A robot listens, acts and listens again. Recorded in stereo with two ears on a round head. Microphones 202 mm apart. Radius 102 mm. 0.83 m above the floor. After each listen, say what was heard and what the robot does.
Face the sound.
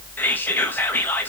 Turn 30° left.
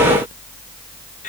Keep listening.
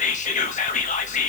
So it is at 140° left. Turn 140° left.
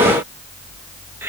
Keep listening.
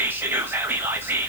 The whispering is now 10° right. Turn 10° right.
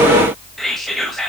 Found it: whispering, straight ahead, 1 to 2 m away.